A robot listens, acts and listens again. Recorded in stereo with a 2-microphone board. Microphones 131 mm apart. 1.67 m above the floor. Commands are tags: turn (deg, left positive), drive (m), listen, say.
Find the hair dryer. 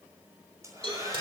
<turn deg="-25"/>
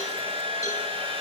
<turn deg="-135"/>
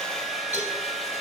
<say>Facing the hair dryer, over 4 m away.</say>